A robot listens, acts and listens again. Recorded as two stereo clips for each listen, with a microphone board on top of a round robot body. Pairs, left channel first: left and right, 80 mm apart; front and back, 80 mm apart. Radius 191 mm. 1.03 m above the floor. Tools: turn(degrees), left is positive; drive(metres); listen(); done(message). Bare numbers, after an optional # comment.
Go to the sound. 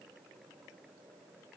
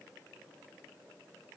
listen()
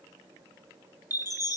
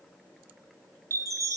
# The chime: 135° left.
turn(135)
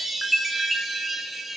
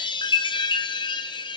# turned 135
drive(1.0)
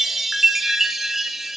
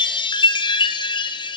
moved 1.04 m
drive(1.0)
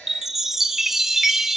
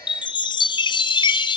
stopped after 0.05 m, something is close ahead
done("Arrived at the chime, straight ahead.")